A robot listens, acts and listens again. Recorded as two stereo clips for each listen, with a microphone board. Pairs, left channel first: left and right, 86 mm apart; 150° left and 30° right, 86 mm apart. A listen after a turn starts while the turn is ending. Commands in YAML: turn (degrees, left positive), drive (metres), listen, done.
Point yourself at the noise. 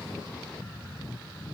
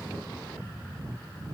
listen: true
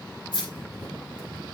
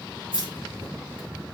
turn: 125
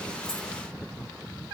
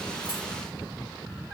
listen: true
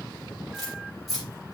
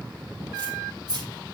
done: "Facing the keys jangling, over 4 m away."